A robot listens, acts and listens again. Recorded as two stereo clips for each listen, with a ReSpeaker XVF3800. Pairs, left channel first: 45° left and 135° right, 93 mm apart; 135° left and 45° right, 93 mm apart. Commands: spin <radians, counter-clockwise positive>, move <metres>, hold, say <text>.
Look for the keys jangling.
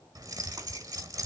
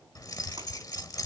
spin 3.14
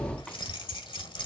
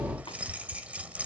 spin 0.52
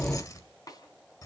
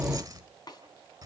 say Facing the keys jangling.